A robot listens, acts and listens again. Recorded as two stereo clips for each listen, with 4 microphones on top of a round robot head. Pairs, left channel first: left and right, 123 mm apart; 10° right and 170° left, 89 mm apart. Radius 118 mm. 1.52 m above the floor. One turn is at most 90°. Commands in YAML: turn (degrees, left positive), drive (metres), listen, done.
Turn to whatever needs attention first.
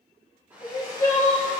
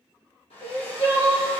turn: 20
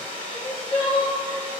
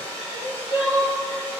done: "Facing the crying."